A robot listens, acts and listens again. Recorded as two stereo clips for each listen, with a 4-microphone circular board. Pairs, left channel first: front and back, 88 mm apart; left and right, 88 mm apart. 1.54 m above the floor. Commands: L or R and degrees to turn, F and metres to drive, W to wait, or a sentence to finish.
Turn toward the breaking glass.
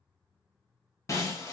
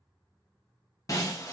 L50
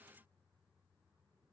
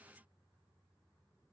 Facing where the breaking glass came from. I can't hear it now.